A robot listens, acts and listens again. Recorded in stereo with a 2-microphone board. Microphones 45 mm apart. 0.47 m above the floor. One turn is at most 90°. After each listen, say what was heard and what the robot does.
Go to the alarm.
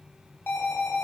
The alarm: about 55° left or 125° left. Turn 55° left.
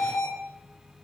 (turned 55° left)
So it is at 70° left. Turn 70° left.
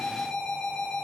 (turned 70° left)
The alarm is now 20° left. Turn 20° left.
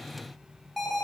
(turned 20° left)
Drive 1.0 m forward.
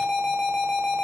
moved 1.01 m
Drive 1.0 m forward.
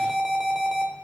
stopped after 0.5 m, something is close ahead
I am next to the alarm.